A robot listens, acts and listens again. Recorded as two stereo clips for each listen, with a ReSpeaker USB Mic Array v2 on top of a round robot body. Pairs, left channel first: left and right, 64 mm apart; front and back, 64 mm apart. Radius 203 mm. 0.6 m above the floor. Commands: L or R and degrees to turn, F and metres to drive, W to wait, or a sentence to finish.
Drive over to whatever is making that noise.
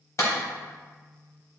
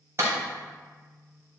L130
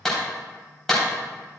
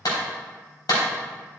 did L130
F1.0
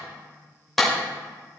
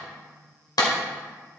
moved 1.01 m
F1.0
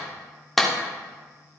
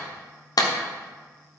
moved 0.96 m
F1.0
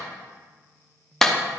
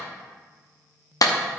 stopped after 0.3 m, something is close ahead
I am next to the clap.